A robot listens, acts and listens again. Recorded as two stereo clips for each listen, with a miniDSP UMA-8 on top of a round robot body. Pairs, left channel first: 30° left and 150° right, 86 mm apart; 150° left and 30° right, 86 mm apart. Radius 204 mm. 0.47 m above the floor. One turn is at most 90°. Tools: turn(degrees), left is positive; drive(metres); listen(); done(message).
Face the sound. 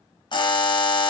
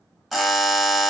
turn(degrees=60)
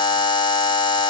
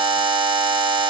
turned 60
done("Facing the buzzer.")